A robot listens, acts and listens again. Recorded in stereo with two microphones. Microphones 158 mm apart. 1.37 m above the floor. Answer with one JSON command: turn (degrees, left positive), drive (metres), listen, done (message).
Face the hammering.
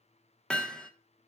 {"turn": 30}
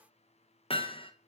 {"turn": 145}
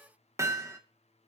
{"turn": -20}
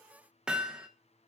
{"done": "Facing the hammering, under 1 m away."}